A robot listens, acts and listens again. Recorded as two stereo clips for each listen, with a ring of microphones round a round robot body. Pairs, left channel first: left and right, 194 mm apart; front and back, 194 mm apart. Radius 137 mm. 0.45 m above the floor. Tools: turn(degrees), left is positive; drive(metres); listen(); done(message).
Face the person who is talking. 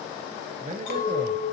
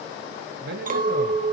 turn(degrees=-145)
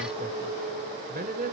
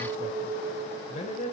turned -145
turn(degrees=-60)
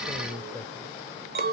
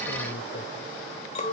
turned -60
listen()
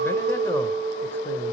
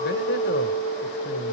listen()
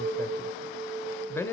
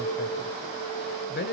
turn(degrees=15)
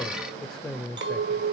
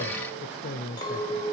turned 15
done("Found it: a man speaking, straight ahead, 1 to 2 m away.")